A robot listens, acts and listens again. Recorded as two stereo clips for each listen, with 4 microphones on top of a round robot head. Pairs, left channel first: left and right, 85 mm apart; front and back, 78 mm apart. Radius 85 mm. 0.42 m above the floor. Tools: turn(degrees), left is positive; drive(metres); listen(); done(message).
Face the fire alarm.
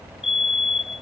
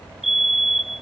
turn(degrees=95)
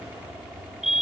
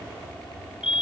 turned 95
done("Found it: a fire alarm, straight ahead.")